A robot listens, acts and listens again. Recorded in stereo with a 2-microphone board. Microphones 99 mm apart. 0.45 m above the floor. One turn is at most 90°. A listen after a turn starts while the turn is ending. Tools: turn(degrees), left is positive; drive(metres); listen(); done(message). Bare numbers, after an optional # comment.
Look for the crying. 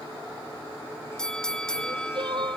# The crying: about 50° right or 130° right.
turn(-50)
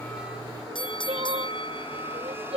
# So it is at 80° right.
turn(-80)
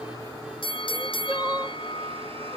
# The crying is now 15° right.
turn(-15)
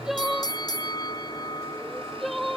done("Found it: crying, straight ahead.")